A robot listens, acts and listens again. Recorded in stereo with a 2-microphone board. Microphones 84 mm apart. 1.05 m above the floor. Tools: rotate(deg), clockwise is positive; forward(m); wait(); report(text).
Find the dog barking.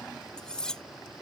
wait()
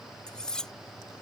wait()
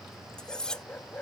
rotate(-20)
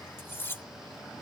wait()
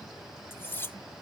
wait()
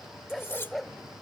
report("Facing the dog barking.")